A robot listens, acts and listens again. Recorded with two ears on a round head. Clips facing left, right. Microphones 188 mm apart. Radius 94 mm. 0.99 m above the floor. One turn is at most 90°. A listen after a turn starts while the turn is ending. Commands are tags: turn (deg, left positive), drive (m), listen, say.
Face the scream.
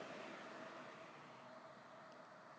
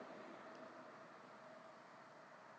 <listen/>
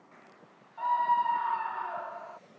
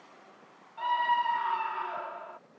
<turn deg="-35"/>
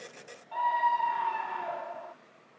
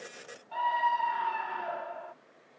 <say>Facing the scream.</say>